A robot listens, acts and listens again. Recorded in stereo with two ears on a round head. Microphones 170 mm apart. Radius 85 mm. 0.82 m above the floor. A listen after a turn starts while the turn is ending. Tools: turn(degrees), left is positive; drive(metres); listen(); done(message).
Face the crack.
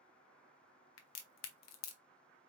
turn(degrees=90)
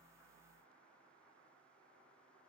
done("Facing where the crack came from. I can't hear it now.")